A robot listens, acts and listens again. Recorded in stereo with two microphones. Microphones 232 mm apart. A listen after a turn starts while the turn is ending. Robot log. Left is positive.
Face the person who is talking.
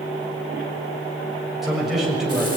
cmd yaw +30
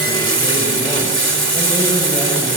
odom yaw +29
cmd idle
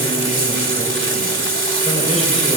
cmd idle
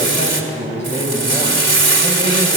note: So it is at 150° left.
cmd yaw +150
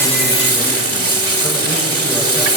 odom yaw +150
cmd idle
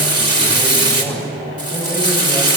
cmd idle
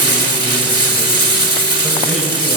end: I heard a man speaking from this way, but can't make it out now.